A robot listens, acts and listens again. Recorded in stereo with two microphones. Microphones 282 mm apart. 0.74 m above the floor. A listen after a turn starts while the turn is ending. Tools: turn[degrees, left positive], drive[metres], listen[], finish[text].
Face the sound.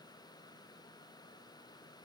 Action: listen[]
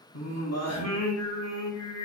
Thought: The singing: about 60° left or 120° left.
Action: turn[60]
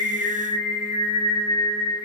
Thought: So it is at 10° left.
Action: turn[10]
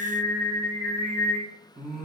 Action: finish[Facing the singing, 1 to 2 m away.]